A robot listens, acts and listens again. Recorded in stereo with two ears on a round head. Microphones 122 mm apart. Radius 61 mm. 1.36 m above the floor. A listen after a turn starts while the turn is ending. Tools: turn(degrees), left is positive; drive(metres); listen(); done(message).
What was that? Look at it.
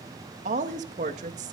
turn(degrees=-60)
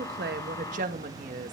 turn(degrees=-60)
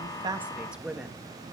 done("Found it: a woman speaking, straight ahead.")